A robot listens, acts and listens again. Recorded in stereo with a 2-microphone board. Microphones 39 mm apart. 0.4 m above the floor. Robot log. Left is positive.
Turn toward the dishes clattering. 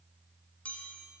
cmd idle
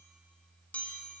cmd idle
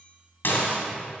note: The dishes clattering: about 60° left or 120° left.
cmd yaw +60
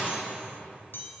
cmd idle
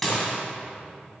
end: Found it: dishes clattering, straight ahead, 2 to 4 m away.